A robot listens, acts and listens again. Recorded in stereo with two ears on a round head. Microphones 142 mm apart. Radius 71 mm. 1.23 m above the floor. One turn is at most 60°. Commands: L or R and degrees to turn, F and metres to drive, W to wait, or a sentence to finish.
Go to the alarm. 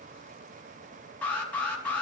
L30
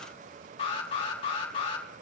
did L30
L60
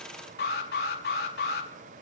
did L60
L60
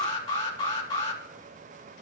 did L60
L30
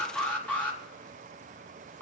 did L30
L10
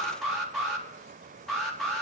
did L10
F1.0
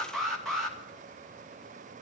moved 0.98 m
F1.0
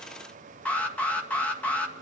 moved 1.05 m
L10
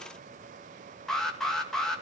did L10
F1.0
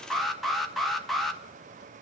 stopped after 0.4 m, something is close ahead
I am next to the alarm.